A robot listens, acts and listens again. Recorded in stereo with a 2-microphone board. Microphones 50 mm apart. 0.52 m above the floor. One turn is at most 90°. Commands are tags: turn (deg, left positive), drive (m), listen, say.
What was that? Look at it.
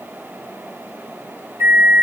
<turn deg="-50"/>
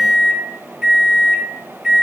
<turn deg="-15"/>
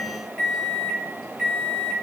<say>Found it: a microwave, straight ahead, under 1 m away.</say>